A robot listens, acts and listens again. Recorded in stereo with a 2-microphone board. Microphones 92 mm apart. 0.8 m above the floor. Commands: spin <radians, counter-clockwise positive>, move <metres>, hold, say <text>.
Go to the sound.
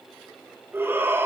spin -0.44
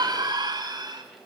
spin -2.18
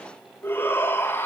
spin 0.44
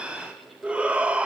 spin -0.26
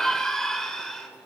move 1.0
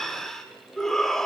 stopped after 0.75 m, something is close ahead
say Something is in my way. I am facing the shout but have not reached it.